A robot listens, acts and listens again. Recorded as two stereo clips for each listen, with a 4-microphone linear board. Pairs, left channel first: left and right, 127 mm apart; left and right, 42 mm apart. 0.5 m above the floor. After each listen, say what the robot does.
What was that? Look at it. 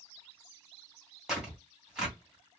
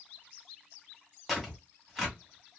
Turn 30° right.
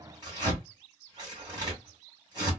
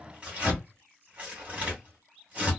Turn 145° right.
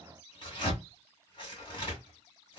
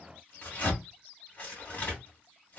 Turn 40° left.
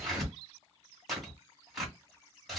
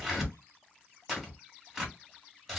Found it: tearing paper, straight ahead, 2 to 4 m away.